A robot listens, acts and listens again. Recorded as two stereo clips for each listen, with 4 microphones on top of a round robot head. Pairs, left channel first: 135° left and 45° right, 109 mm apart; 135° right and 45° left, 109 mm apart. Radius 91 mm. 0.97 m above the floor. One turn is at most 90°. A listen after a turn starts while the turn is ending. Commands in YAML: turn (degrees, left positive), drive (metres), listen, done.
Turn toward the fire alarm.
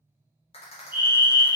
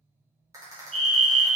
turn: 20
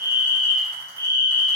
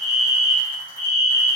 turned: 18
done: "Facing the fire alarm, 2 to 4 m away."